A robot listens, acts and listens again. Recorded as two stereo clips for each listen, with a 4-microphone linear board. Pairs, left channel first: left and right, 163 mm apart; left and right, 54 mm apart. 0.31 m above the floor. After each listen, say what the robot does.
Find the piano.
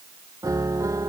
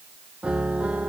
Turn 20° right.
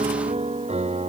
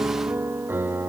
Turn 140° right.
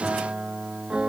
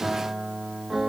Facing the piano.